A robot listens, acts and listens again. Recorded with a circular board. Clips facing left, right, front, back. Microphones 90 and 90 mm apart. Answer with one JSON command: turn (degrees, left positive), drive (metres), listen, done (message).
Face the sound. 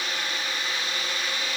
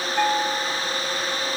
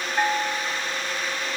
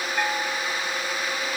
{"turn": -70}
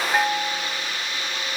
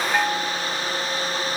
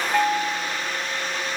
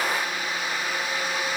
{"turn": 10}
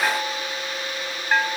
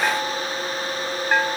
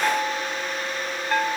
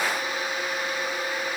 {"done": "Facing the bell."}